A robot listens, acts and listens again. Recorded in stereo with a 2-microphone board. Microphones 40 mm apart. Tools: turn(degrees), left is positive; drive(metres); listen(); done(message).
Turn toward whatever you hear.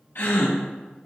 turn(degrees=65)
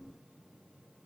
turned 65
listen()
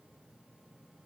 done("I heard a gasp, but can't make it out now. It was about straight ahead or 50° left.")